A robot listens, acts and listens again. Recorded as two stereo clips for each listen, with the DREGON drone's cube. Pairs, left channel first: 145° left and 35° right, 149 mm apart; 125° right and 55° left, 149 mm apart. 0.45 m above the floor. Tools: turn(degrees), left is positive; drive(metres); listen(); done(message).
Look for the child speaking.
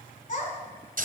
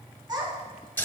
turn(degrees=115)
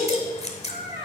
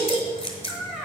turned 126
turn(degrees=-30)
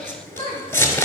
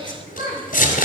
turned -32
done("Facing the child speaking.")